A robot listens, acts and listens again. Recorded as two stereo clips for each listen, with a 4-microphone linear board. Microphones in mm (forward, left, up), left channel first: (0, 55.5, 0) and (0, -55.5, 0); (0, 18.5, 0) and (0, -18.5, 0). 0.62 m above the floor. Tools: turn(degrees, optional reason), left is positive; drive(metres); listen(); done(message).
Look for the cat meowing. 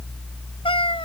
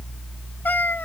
turn(degrees=55, reason="The cat meowing: about 55° left or 125° left.")
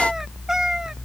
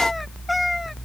done("Facing the cat meowing.")